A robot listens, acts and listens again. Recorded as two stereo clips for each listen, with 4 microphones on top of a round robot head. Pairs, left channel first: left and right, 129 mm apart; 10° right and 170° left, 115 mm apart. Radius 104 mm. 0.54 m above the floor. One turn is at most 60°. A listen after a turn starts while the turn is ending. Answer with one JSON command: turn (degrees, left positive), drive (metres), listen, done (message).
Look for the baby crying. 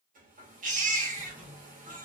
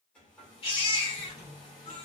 {"turn": -60}
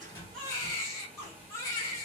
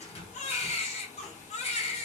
{"turn": 20}
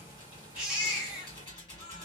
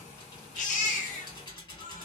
{"done": "Facing the baby crying."}